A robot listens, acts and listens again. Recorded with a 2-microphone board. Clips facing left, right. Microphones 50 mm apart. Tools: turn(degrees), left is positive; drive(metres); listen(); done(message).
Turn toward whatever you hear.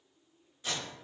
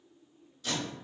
turn(degrees=25)
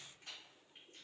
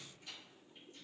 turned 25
listen()
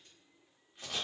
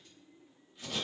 turn(degrees=125)
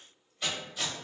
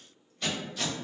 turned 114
turn(degrees=10)
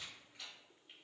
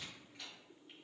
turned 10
listen()
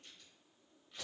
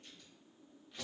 done("Facing the tape being pulled, 1 to 2 m away.")